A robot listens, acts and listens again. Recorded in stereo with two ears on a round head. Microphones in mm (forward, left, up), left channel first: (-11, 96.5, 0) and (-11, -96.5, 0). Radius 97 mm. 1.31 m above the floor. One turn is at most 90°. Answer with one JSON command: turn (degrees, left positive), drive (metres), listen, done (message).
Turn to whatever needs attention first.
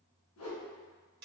{"listen": true}
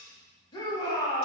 {"turn": 20}
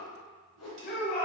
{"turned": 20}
{"turn": 90}
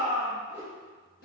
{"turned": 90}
{"turn": 40}
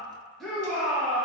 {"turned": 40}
{"done": "Found it: a shout, straight ahead."}